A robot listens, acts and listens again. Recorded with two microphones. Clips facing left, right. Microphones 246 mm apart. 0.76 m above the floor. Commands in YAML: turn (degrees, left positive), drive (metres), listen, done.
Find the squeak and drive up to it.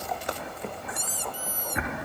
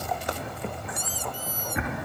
turn: 65
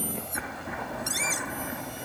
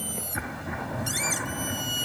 drive: 1.0
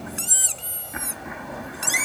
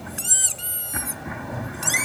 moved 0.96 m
drive: 1.0
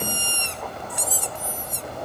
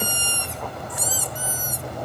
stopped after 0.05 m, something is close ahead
done: "Arrived at the squeak, straight ahead."